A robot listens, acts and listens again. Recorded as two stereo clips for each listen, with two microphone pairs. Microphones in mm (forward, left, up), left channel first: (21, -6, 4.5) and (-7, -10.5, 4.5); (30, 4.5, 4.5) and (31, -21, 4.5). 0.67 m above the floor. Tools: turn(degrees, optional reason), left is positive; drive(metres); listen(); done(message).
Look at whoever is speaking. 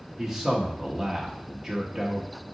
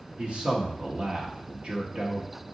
turn(degrees=-95, reason="The man speaking: 95° right.")
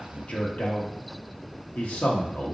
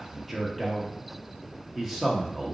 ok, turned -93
done("Facing the man speaking.")